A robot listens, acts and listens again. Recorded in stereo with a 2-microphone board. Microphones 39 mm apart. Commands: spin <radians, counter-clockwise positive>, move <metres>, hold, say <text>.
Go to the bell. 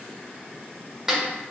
hold
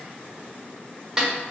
hold
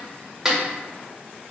say I can't make out a bell, only a snare drum.